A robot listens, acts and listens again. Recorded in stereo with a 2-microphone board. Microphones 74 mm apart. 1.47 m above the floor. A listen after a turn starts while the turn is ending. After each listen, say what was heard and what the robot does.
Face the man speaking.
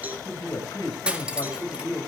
The man speaking: about 60° left or 120° left. Turn 60° left.
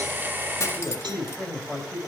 Found it: a man speaking, straight ahead, over 4 m away.